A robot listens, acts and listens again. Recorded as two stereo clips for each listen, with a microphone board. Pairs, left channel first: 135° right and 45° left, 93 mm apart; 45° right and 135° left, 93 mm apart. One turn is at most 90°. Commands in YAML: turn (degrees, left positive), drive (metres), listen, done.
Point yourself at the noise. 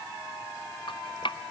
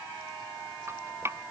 turn: -90
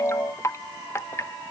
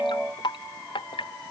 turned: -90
turn: -75
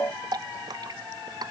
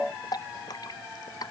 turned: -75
done: "Facing the dripping."